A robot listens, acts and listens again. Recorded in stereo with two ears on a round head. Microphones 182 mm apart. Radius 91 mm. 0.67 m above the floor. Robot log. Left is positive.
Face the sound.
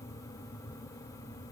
cmd idle
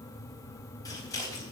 note: The scissors: about 20° left or 160° left.
cmd yaw +20
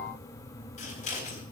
note: So it is at 140° left.
cmd yaw +140
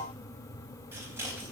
note: The scissors is now 15° right.
cmd yaw -15
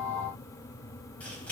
end: Found it: scissors, straight ahead.